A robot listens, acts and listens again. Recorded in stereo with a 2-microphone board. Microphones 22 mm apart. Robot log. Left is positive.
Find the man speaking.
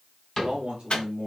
note: The man speaking: about 60° right or 120° right.
cmd yaw -60
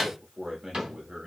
note: So it is at 50° right.
cmd yaw -50
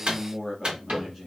end: Facing the man speaking.